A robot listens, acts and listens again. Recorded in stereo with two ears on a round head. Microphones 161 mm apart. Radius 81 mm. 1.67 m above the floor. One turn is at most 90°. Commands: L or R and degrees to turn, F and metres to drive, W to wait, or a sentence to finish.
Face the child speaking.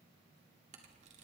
W
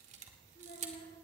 L35
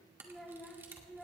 Found it: a child speaking, straight ahead.